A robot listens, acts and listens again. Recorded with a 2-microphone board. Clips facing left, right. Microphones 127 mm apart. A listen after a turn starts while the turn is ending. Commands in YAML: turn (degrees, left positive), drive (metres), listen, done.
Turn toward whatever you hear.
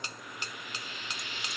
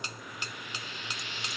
turn: 30
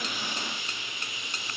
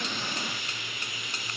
turn: 150
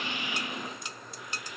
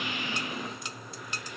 listen: true
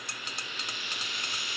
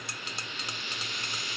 done: "Found it: frying, straight ahead, over 4 m away."